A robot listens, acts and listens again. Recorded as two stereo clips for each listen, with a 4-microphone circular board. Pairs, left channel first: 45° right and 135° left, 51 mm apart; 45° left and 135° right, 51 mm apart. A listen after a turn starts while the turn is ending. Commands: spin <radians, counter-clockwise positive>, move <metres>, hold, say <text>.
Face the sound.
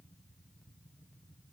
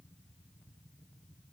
hold
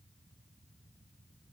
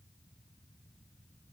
hold
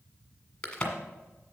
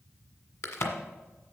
spin 0.44
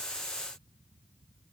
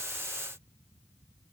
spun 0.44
say Facing where the crack came from. I can't hear it now.